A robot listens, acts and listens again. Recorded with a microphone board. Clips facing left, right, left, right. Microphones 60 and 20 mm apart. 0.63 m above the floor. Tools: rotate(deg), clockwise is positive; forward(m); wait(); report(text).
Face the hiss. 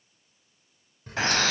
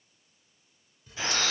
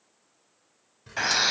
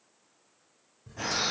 rotate(-55)
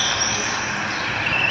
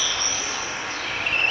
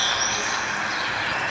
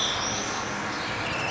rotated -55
wait()
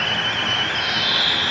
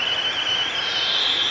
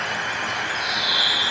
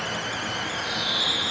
wait()
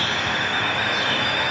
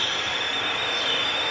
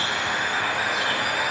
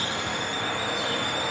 report("I heard a hiss, but can't make it out now. It was about straight ahead or 70° left.")